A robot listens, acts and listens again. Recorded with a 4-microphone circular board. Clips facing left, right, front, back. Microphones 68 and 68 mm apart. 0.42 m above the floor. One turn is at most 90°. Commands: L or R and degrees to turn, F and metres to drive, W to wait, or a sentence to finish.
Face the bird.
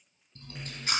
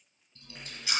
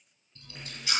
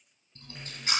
W
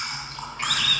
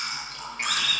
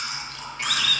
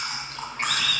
R90
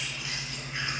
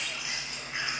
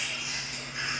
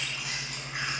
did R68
R65
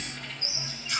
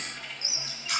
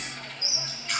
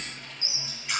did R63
Facing the bird.